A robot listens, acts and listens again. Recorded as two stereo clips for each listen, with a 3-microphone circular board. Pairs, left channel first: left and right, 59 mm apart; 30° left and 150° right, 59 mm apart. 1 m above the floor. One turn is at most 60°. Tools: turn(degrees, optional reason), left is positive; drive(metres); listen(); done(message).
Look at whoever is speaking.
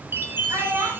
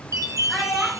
turn(degrees=-60, reason="The child speaking: 60° right.")
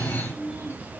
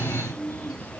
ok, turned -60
listen()
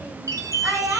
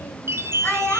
turn(degrees=-25, reason="The child speaking is now 25° right.")
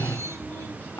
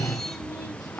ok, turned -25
listen()
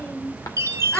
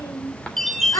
turn(degrees=25, reason="The child speaking is now 25° left.")
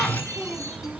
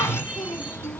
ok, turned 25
done("Facing the child speaking.")